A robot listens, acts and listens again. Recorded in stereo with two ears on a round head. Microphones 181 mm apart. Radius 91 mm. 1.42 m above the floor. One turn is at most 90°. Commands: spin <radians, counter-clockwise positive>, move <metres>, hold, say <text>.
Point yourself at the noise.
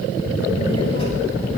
spin 0.52
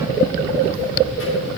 spin 1.57
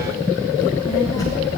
spin 0.26
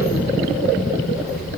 say Facing the child speaking, over 4 m away.